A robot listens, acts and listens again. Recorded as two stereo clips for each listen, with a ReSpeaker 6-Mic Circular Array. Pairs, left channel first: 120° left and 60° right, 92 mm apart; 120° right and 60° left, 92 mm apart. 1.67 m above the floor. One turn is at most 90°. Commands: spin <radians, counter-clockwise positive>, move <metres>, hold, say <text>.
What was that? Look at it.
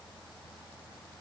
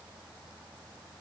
hold
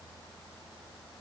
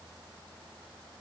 hold
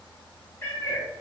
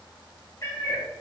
spin -1.57
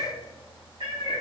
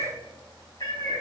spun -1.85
spin -1.40
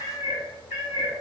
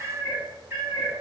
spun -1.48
say Facing the cat meowing, over 4 m away.